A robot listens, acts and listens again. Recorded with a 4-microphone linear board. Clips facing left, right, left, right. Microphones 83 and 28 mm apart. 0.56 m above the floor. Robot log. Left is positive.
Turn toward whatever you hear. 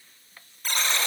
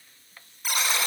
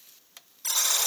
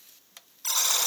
cmd yaw -30
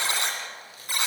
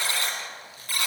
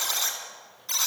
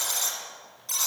note: So it is at 20° left.
cmd yaw +20
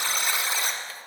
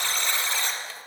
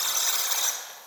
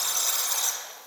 note: The buzzer is now 10° left.
cmd yaw +10
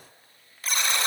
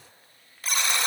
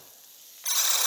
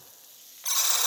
end: Facing the buzzer, 1 to 2 m away.